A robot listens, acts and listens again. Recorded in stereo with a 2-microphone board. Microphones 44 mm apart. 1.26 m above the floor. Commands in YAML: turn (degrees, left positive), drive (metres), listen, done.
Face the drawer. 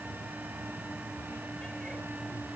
listen: true
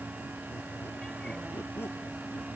listen: true
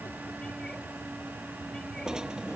turn: -15
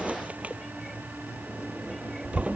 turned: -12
turn: -150
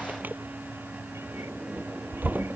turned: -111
turn: -40
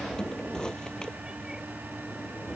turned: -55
turn: 15
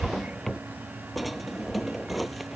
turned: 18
done: "Found it: a drawer, straight ahead."